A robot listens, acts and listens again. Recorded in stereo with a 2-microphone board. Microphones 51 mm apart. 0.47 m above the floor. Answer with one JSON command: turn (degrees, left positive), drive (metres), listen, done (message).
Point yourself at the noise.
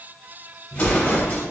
{"turn": 30}
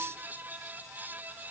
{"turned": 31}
{"listen": true}
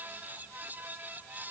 {"done": "I heard an explosion, but can't make it out now. It was about straight ahead or 120° left."}